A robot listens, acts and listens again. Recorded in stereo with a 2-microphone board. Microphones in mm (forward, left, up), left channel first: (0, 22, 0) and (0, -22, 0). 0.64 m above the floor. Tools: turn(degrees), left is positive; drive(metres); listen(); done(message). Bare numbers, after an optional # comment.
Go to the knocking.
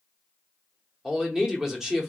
listen()
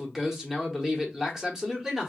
listen()
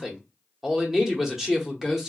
done("I can't make out knocking to turn to.")